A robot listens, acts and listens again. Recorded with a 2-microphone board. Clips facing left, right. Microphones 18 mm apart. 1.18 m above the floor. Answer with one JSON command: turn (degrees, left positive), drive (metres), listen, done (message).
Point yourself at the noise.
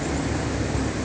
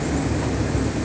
{"listen": true}
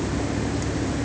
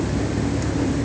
{"listen": true}
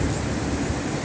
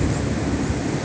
{"done": "I can't make out anything."}